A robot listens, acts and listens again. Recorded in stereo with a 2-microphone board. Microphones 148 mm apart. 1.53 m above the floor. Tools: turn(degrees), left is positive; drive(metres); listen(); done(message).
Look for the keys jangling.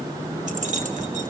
turn(degrees=-60)
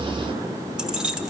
done("Facing the keys jangling, 1 to 2 m away.")